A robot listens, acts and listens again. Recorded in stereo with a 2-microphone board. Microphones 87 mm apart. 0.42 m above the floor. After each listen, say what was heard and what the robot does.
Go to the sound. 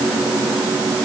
Keep listening.
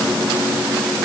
Keep listening.
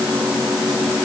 I can't make out anything to turn to.